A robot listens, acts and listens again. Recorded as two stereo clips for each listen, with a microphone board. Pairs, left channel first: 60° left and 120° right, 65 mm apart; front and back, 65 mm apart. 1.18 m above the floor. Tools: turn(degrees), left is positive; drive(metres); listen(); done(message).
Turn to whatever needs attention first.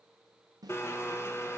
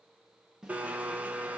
listen()
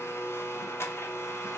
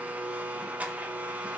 listen()
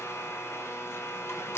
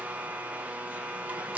done("I can't make out anything urgent, only a blender.")